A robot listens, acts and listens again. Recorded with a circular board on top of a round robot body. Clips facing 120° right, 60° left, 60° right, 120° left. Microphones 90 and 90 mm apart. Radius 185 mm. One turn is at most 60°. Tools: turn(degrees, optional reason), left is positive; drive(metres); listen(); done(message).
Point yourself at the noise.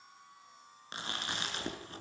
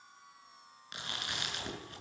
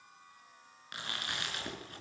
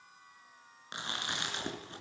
turn(degrees=-60, reason="The chewing: 175° right.")
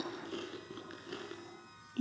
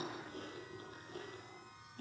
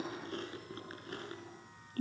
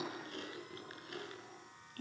turn(degrees=-60, reason="The chewing is now 115° right.")
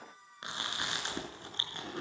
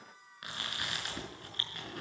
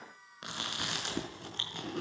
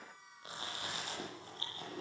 turn(degrees=-55, reason="The chewing is now 55° right.")
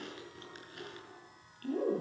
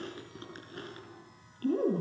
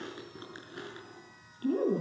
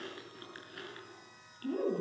turn(degrees=10, reason="The chewing is now 10° left.")
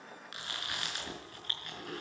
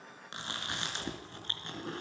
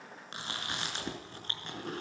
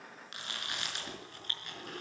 done("Facing the chewing, over 4 m away.")